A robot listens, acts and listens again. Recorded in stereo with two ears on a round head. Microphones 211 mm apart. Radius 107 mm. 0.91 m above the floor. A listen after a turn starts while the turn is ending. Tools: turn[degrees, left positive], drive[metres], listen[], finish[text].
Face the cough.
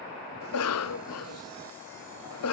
Thought: The cough: about 70° left or 110° left.
Action: turn[70]
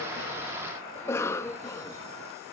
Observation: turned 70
Thought: So it is at 10° left.
Action: turn[10]
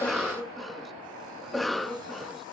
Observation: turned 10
Action: finish[Found it: a cough, straight ahead, under 1 m away.]